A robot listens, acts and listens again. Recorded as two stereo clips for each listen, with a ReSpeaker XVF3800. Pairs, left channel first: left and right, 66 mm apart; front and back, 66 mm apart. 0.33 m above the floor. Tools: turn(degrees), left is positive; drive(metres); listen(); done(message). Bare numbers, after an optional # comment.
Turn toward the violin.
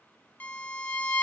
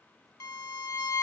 # The violin: 30° left.
turn(30)
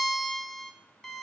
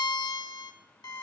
done("Found it: a violin, straight ahead, under 1 m away.")